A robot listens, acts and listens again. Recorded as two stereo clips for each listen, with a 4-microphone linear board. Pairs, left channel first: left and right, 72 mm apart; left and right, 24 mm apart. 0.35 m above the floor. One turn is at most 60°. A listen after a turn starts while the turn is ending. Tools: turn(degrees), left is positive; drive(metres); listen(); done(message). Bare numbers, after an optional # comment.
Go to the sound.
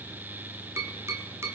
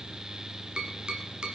# The tapping: about 35° right or 145° right.
turn(-35)
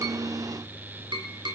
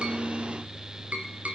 # So it is at 110° right.
turn(-60)
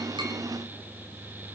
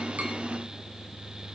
# Nothing new. It was at 50° right.
turn(-50)
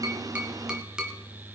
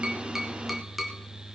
# The tapping is now 10° right.
turn(-10)
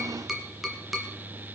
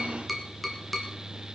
drive(1.0)
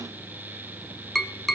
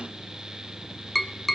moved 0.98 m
drive(1.0)
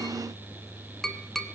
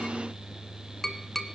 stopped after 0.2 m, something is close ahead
done("Arrived at the tapping, straight ahead.")